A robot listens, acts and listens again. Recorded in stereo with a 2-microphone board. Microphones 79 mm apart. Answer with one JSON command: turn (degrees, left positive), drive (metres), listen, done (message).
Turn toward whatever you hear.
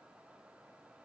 {"listen": true}
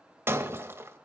{"turn": -35}
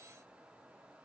{"listen": true}
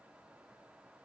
{"done": "I heard breaking glass, but can't make it out now. It was about straight ahead or 110° right."}